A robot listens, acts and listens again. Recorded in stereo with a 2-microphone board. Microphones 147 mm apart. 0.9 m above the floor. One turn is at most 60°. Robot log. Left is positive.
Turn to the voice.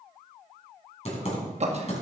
note: The man speaking: about 45° right or 135° right.
cmd yaw -45
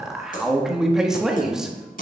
end: Found it: a man speaking, straight ahead.